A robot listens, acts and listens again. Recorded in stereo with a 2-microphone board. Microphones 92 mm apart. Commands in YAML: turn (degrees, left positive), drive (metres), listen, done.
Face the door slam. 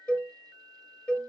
listen: true
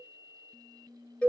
listen: true
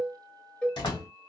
turn: 60
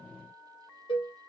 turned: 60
listen: true
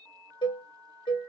done: "I heard a door slam, but can't make it out now. It was about straight ahead or 60° left."